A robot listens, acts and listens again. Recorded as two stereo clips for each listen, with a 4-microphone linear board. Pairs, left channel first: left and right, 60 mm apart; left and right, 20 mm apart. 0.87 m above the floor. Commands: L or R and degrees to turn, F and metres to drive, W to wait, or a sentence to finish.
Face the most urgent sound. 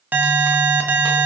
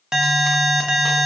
R30
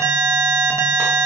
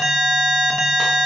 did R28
R115
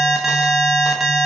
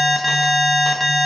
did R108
Facing the alarm, under 1 m away.